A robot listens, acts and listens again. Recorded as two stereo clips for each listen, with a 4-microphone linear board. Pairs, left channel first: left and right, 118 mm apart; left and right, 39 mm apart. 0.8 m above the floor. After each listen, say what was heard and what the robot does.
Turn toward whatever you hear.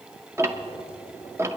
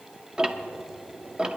The ticking: about 25° right or 155° right. Turn 25° right.
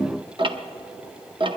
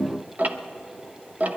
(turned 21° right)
So it is at 135° right. Turn 135° right.
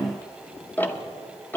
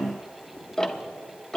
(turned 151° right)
The ticking is now 15° left. Turn 15° left.
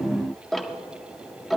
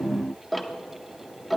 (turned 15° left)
Found it: ticking, straight ahead, under 1 m away.